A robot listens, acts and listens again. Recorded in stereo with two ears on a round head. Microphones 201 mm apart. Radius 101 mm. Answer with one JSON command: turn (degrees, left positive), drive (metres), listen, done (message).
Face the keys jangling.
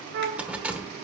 {"turn": -30}
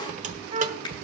{"turn": -145}
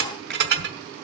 {"turn": -55}
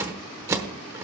{"turn": -15}
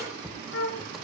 {"done": "Facing the keys jangling, 1 to 2 m away."}